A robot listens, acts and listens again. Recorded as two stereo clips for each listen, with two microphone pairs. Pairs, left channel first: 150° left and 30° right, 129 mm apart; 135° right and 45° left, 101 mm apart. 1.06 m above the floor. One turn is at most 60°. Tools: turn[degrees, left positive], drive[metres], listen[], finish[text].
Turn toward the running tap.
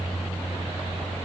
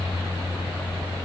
Action: listen[]
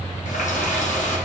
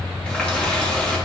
Thought: The running tap: 150° left.
Action: turn[60]
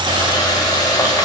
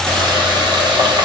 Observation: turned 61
Thought: The running tap is now 90° left.
Action: turn[60]
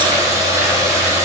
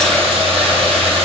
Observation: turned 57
Thought: The running tap is now 35° left.
Action: turn[35]
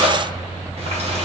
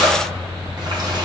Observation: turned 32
Action: finish[Found it: a running tap, straight ahead.]